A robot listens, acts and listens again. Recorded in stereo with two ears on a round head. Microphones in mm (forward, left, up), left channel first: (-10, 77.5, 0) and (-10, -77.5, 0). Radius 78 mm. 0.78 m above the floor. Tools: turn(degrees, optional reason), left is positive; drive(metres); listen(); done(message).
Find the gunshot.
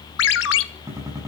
turn(degrees=-15, reason="The gunshot: about 15° right or 165° right.")
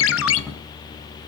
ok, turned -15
listen()
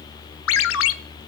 done("I heard a gunshot, but can't make it out now. It was about straight ahead or 150° right.")